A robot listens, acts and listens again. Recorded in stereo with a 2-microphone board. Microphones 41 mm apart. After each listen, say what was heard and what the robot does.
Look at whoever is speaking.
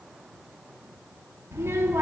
Turn 90° right.
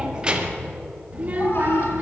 So it is at 40° right. Turn 40° right.
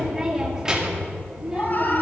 The child speaking is now 20° right. Turn 20° right.
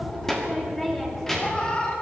Found it: a child speaking, straight ahead.